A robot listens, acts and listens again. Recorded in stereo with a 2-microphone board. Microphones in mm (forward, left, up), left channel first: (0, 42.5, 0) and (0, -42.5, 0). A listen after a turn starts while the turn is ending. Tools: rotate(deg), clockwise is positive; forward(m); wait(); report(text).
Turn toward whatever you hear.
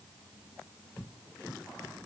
wait()
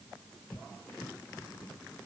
wait()
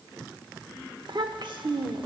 rotate(65)
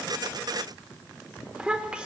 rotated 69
rotate(15)
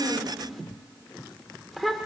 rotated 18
report("Facing the child speaking.")